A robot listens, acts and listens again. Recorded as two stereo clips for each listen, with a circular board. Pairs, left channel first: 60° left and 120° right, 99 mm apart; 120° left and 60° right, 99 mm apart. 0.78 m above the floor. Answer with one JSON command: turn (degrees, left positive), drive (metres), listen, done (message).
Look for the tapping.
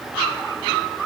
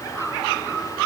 {"listen": true}
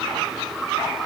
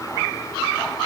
{"listen": true}
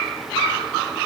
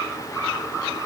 {"done": "I can't make out tapping to turn to."}